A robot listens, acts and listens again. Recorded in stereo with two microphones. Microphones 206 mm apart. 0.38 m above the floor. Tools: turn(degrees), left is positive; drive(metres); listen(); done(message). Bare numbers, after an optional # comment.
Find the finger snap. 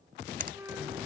# The finger snap: about 45° right or 135° right.
turn(-45)
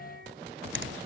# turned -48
# So it is at 80° right.
turn(-80)
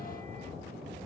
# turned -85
listen()
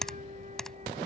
done("Found it: a finger snap, straight ahead.")